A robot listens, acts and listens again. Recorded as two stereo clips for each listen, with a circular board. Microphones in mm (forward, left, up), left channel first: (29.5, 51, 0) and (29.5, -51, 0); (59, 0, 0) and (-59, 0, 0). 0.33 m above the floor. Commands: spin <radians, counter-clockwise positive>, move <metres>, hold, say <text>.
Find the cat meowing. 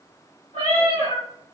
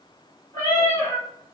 spin 0.96
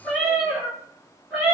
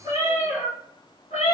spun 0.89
spin -0.35
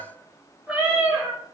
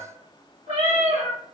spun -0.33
spin -0.35
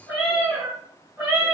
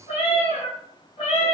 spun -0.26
spin -0.35
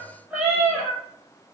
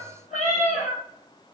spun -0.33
say Found it: a cat meowing, straight ahead.